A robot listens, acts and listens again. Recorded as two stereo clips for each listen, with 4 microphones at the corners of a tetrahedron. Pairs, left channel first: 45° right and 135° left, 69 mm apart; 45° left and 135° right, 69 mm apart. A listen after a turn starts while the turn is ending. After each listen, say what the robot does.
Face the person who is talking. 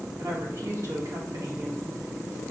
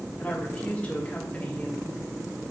Turn 110° left.
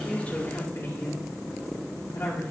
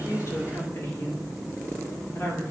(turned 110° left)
Found it: a woman speaking, straight ahead.